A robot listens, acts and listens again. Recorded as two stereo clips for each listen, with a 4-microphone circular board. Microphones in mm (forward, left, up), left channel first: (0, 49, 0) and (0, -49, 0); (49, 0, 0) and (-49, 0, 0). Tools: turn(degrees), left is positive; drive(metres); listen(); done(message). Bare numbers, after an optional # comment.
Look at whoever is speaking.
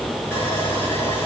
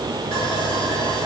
listen()
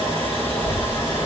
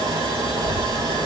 # The child speaking: 65° left.
turn(65)
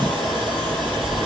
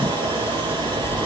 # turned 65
# The child speaking is now 25° right.
turn(-25)
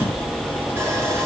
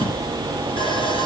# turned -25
listen()
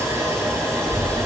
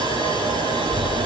# The child speaking is now 15° left.
turn(15)
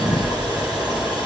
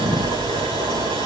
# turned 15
done("Facing the child speaking.")